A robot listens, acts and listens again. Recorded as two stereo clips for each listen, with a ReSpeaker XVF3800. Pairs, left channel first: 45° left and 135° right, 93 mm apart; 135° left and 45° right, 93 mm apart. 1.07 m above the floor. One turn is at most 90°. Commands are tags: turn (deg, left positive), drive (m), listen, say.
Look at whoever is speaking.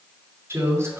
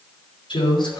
<turn deg="90"/>
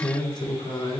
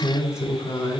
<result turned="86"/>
<turn deg="80"/>
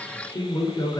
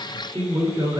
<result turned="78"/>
<say>Found it: a woman speaking, straight ahead, over 4 m away.</say>